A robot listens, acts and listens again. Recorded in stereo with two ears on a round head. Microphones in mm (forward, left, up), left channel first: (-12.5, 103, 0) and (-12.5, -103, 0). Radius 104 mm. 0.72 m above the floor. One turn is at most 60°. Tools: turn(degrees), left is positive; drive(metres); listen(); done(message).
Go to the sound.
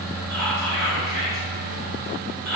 turn(degrees=30)
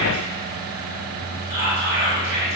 turn(degrees=-25)
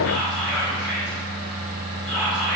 drive(metres=1.0)
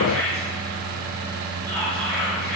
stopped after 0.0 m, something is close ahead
done("Blocked. The whispering is further on, straight ahead.")